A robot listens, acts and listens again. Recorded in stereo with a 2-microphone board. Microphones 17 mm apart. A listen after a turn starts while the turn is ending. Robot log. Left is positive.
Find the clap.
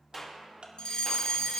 cmd yaw +30
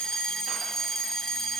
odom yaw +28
cmd idle
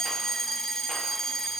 cmd idle
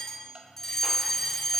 end: I heard a clap, but can't make it out now. It was about 15° right or 140° left.